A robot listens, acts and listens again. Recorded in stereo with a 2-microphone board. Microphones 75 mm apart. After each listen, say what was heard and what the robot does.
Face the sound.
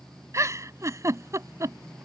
The giggle: about 40° right or 140° right. Turn 40° right.
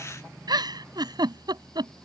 So it is at 95° right. Turn 95° right.
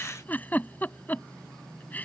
The giggle is now 25° left. Turn 25° left.
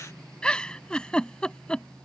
The giggle is now 15° left. Turn 15° left.
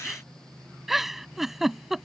Facing the giggle.